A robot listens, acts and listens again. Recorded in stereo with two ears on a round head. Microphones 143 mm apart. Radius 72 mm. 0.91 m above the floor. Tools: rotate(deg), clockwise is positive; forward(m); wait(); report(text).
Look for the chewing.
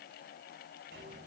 wait()
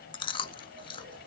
rotate(-30)
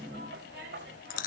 rotate(-115)
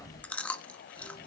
rotate(-10)
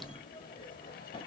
wait()
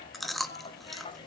report("Facing the chewing, 1 to 2 m away.")